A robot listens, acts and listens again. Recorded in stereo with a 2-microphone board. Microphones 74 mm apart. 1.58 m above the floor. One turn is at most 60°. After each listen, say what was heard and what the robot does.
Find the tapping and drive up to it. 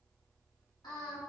Keep listening.
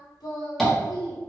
Turn 30° left.
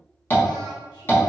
So it is at 145° left. Turn 60° left.
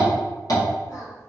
The tapping is now 115° left. Turn 60° left.
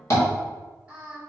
The tapping is now 50° left. Turn 50° left.
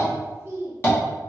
The tapping is now 30° left. Turn 30° left.
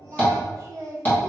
The tapping is now 25° left. Turn 25° left.
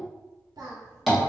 Drive 1.0 m forward.
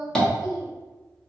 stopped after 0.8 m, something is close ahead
The tapping is now 10° left. Turn 10° left.
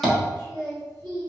Arrived at the tapping, straight ahead.